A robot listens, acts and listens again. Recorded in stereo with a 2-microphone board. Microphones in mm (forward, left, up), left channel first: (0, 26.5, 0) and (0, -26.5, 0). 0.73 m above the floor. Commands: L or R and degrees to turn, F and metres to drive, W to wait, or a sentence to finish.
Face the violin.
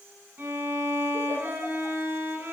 R35
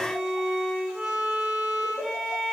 Found it: a violin, straight ahead, over 4 m away.